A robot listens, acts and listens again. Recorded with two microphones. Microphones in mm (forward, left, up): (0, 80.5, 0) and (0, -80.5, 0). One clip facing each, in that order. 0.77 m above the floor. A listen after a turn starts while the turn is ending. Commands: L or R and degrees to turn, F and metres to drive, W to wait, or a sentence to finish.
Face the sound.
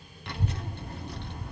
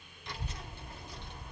L65
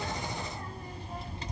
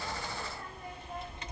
L35
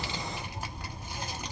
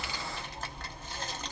L15
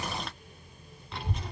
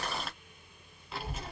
Facing the child speaking.